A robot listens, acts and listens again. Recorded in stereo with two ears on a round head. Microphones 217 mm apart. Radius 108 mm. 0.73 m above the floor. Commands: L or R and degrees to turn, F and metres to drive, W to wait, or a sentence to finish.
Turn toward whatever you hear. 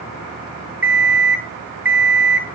R30
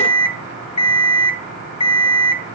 L25
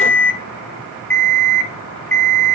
L10
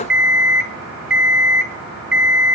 Facing the alarm clock.